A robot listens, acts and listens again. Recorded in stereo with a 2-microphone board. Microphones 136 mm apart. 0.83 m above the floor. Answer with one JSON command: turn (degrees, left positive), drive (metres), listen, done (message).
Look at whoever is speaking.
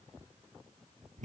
{"listen": true}
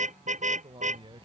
{"turn": -40}
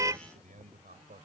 {"turn": -100}
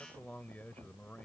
{"turn": 10}
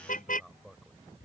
{"done": "Found it: a man speaking, straight ahead."}